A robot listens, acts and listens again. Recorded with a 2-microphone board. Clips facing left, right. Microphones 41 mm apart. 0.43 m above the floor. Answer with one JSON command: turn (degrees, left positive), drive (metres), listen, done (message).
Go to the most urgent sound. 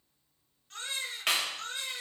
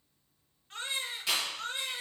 {"turn": -20}
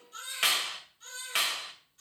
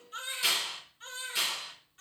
{"turn": -140}
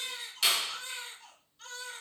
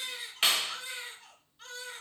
{"turn": -10}
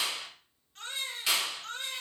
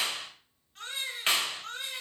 {"drive": 1.0}
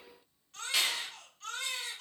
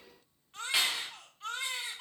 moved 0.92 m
{"turn": -15}
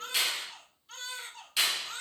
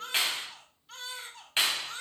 {"drive": 1.0}
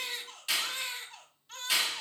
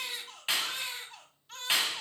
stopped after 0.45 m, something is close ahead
{"done": "I am next to the baby crying."}